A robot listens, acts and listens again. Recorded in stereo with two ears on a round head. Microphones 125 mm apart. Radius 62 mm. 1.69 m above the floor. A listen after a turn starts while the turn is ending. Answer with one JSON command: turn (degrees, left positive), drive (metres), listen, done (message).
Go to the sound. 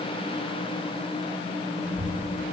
{"turn": -55}
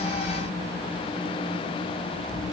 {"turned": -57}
{"drive": 1.0}
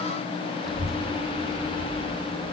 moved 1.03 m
{"drive": 1.0}
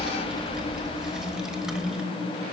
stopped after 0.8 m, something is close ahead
{"done": "I am next to the child speaking."}